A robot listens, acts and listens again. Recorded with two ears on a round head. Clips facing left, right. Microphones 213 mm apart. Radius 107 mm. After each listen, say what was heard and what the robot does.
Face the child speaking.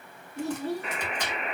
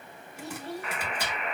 The child speaking: about 75° left or 105° left. Turn 75° left.
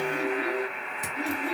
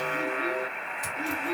So it is at 35° left. Turn 35° left.
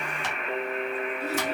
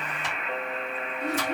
Keep listening.
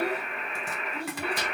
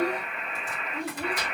Facing the child speaking, 1 to 2 m away.